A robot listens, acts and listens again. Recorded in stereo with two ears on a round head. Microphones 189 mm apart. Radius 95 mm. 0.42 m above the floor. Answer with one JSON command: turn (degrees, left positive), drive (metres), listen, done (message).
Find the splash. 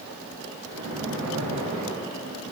{"turn": -90}
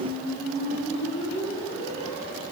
{"done": "Facing where the splash came from. I can't hear it now."}